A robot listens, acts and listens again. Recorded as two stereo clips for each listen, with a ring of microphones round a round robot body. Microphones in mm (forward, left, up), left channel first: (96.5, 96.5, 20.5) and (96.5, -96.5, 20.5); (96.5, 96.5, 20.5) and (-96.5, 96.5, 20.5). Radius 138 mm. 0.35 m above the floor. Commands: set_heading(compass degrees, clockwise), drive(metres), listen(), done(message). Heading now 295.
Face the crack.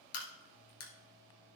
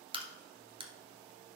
set_heading(180)
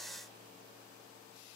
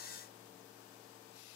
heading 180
done("I heard a crack from this way, but can't make it out now.")